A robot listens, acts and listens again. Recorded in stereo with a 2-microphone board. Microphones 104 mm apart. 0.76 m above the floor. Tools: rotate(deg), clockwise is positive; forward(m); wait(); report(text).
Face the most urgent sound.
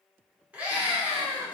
rotate(30)
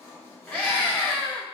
rotate(-15)
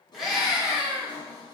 report("Facing the scream.")